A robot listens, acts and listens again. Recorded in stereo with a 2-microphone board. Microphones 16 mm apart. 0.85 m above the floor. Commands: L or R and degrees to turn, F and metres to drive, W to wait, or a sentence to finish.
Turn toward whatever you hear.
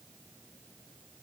W
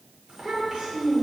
R65
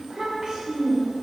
R60
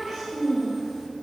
Facing the child speaking, 2 to 4 m away.